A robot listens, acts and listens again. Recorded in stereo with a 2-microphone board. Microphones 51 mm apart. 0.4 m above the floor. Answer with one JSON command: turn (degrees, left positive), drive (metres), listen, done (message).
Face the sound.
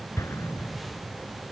{"turn": 90}
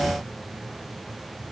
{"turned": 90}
{"done": "Facing where the explosion came from. I can't hear it now."}